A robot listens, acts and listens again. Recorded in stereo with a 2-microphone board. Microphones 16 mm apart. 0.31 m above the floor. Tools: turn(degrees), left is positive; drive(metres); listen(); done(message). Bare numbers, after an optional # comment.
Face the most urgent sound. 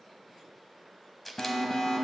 # The alarm: about 55° left or 125° left.
turn(55)
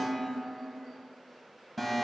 done("Facing the alarm.")